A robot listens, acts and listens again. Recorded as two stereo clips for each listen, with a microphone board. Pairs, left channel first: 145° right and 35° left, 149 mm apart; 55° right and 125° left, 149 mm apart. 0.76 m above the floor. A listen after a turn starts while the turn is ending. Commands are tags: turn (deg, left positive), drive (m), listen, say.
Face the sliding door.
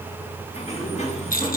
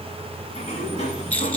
<turn deg="-100"/>
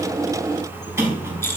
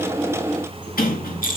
<turn deg="-40"/>
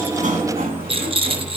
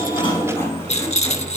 <turn deg="20"/>
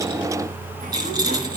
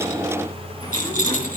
<listen/>
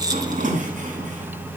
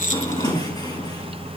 <say>Facing the sliding door, over 4 m away.</say>